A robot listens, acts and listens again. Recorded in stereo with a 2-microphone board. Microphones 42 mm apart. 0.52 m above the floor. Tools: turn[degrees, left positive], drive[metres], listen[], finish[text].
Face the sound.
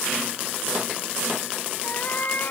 Thought: The cat meowing: about 50° left or 130° left.
Action: turn[50]
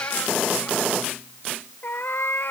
Thought: So it is at 60° left.
Action: turn[60]
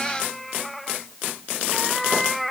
Action: finish[Found it: a cat meowing, straight ahead.]